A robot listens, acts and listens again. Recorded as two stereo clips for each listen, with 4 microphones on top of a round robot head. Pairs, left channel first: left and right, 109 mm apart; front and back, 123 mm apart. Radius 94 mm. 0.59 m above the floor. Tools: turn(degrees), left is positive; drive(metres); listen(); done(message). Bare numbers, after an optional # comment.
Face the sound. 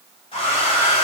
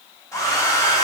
# The hair dryer: 65° left.
turn(65)
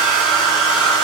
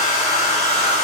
# The hair dryer is now 10° right.
turn(-10)
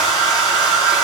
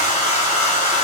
done("Found it: a hair dryer, straight ahead.")